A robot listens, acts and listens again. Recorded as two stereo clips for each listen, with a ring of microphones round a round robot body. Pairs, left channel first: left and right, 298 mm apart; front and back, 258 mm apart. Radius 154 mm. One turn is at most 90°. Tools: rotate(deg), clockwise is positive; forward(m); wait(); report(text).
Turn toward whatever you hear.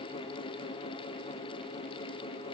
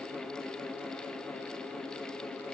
wait()
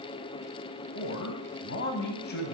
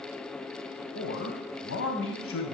rotate(-35)
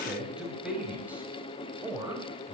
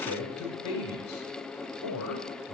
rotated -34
rotate(10)
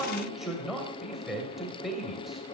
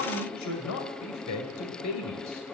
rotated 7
report("Facing the man speaking, 2 to 4 m away.")